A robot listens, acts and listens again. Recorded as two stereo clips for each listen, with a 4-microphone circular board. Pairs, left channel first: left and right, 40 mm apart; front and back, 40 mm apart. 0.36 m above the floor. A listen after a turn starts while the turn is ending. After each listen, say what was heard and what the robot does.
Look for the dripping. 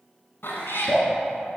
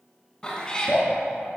The dripping: 30° left. Turn 30° left.
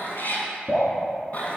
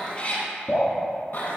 Facing the dripping.